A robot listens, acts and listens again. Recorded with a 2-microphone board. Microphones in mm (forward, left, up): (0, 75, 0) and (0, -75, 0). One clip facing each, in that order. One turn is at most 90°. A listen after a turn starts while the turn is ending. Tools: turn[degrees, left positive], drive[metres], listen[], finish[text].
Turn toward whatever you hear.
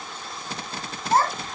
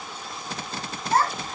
Thought: The child speaking: about 40° left or 140° left.
Action: turn[40]
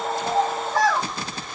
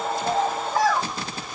Action: finish[Found it: a child speaking, straight ahead, 2 to 4 m away.]